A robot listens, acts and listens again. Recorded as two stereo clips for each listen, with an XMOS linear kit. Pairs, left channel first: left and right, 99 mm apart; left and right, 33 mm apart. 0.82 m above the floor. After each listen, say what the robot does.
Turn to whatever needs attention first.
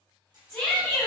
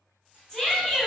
Turn 30° left.
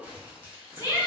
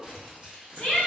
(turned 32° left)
Turn 140° left.
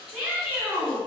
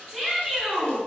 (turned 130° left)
Turn 10° left.
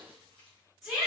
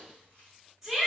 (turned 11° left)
Facing the shout.